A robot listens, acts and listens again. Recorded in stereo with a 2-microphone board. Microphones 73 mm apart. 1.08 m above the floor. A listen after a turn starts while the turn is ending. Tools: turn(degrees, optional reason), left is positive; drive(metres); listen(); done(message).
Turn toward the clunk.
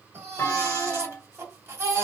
turn(degrees=35, reason="The clunk: about 35° left or 145° left.")
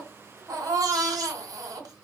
listen()
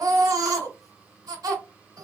done("I heard a clunk, but can't make it out now. It was about straight ahead or 110° left.")